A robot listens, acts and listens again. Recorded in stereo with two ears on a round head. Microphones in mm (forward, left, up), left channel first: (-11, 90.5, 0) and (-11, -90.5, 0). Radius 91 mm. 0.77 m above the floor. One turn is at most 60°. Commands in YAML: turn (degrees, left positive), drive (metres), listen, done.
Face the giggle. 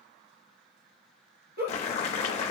turn: -45
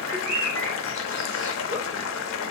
listen: true
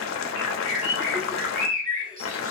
listen: true
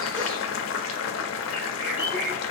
done: "I heard a giggle, but can't make it out now. It was about straight ahead or 90° right."